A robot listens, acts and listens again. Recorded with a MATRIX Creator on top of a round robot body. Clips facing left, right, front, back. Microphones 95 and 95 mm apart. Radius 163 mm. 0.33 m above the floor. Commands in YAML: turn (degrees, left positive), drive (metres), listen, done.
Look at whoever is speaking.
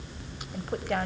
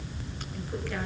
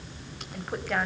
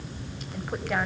turn: 95
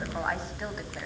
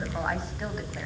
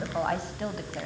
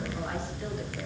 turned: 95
done: "Facing the woman speaking."